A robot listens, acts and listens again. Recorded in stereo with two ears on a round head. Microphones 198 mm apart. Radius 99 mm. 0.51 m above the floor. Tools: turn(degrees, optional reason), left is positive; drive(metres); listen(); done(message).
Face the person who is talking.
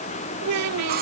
turn(degrees=-90)
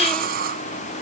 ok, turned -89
listen()
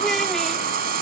listen()
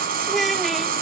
done("Found it: a child speaking, straight ahead.")